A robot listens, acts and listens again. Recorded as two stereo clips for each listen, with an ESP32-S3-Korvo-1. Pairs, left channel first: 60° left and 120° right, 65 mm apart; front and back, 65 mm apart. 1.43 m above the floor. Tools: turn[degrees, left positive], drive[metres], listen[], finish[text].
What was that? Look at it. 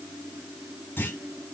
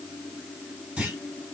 Thought: The clunk: 110° left.
Action: turn[110]
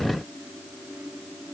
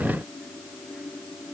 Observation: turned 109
Action: finish[I heard a clunk from this way, but can't make it out now.]